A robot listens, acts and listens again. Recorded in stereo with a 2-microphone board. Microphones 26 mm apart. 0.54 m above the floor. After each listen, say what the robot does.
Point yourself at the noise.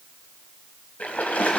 Turn 70° left.
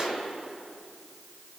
Keep listening.
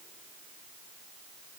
I heard a splash, but can't make it out now. It was about straight ahead or 40° left.